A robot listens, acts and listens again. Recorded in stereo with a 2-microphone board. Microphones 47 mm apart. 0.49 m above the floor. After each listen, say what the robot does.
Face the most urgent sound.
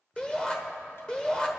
Turn 20° left.
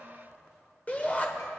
Turn 140° left.
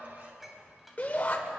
Turn 40° left.
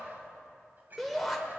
Facing the shout.